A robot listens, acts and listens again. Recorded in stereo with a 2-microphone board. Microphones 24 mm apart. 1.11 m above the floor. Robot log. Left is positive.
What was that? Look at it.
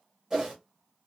note: The whoosh: about 20° right or 160° right.
cmd yaw -20
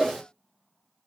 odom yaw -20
end: Facing the whoosh.